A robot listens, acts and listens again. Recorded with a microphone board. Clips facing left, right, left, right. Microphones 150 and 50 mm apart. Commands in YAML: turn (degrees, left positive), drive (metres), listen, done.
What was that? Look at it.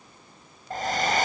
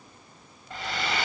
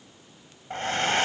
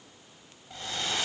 turn: 45
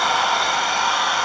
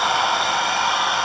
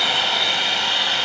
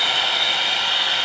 done: "Facing the hair dryer."